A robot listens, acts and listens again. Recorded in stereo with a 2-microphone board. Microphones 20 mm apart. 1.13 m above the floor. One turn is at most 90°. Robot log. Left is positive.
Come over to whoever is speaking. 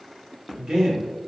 note: The man speaking: about 35° right or 145° right.
cmd yaw -35
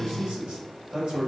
note: So it is at 110° right.
cmd yaw -90
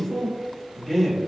cmd fwd 1.0
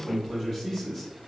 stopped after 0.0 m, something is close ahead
end: Blocked. The man speaking is further on, straight ahead.